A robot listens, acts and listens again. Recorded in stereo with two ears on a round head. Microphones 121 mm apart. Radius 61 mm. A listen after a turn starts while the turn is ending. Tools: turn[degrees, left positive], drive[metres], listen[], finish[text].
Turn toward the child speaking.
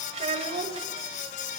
Thought: The child speaking: about 50° right or 130° right.
Action: turn[-50]
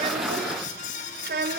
Thought: So it is at 85° right.
Action: turn[-85]
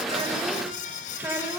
Thought: The child speaking is now 15° right.
Action: turn[-15]
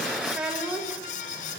Thought: The child speaking is now 10° right.
Action: turn[-10]
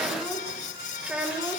Action: finish[Found it: a child speaking, straight ahead.]